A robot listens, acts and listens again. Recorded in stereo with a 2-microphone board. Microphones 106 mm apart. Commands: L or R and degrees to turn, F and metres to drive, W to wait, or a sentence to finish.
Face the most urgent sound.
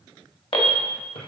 L65
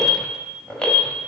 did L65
L10
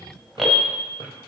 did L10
Facing the alarm, 1 to 2 m away.